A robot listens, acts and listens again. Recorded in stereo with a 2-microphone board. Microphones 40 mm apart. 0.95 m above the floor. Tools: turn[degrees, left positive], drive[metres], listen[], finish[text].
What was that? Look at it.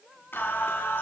Thought: The singing: about 70° left or 110° left.
Action: turn[70]
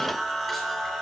Action: finish[Facing the singing.]